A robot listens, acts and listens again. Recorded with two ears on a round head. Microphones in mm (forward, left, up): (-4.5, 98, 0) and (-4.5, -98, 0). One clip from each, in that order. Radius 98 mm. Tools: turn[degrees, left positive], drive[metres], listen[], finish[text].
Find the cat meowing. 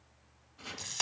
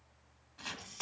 Action: listen[]
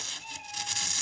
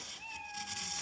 Thought: The cat meowing: about 65° left or 115° left.
Action: turn[65]
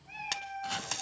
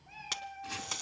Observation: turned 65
Thought: So it is at 50° left.
Action: turn[50]
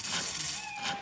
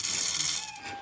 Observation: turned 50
Action: finish[Found it: a cat meowing, straight ahead.]